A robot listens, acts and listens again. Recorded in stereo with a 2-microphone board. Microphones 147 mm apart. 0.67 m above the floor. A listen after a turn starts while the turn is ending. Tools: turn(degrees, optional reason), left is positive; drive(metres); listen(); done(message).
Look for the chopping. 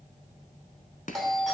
turn(degrees=60, reason="The chopping: about 60° left or 120° left.")
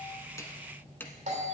listen()
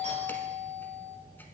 listen()
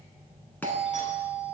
done("I heard chopping, but can't make it out now. It was about straight ahead or 60° left.")